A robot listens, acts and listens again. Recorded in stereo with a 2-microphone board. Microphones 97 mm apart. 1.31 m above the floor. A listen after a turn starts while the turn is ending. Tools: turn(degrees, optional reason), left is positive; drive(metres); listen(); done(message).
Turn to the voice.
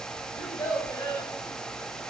turn(degrees=35, reason="The child speaking: about 35° left or 145° left.")
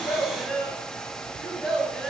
done("Found it: a child speaking, straight ahead, over 4 m away.")